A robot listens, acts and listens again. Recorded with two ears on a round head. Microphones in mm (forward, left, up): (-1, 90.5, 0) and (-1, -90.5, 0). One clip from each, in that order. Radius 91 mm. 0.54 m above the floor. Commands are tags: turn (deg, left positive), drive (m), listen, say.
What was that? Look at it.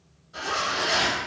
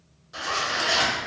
<turn deg="-50"/>
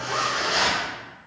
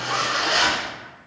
<turn deg="-80"/>
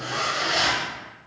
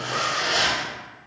<turn deg="-20"/>
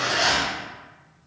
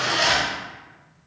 <say>Found it: a zipper, straight ahead, under 1 m away.</say>